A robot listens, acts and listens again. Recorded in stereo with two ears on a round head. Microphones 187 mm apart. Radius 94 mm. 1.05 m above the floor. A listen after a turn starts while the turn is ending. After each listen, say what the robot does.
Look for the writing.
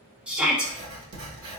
Turn 70° right.
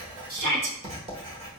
Turn 30° right.
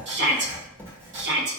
Turn 10° right.
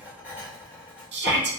Turn 10° right.
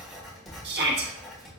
Facing the writing.